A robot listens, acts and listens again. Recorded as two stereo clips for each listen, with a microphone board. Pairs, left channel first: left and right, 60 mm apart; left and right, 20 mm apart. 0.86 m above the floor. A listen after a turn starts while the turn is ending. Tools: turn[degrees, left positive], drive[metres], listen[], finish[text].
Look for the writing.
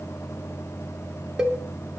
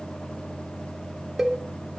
Action: listen[]
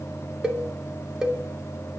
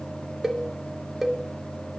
Action: listen[]
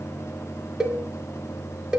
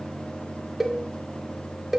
Action: finish[I can't make out writing, only a cowbell.]